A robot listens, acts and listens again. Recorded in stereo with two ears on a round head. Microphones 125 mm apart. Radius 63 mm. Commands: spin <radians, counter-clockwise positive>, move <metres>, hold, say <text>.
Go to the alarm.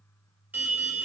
spin -0.52
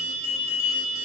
spin -2.36
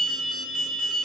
move 1.0
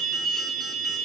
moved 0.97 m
move 1.0
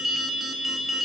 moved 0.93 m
move 1.0
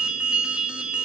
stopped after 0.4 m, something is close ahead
say Arrived at the alarm, straight ahead.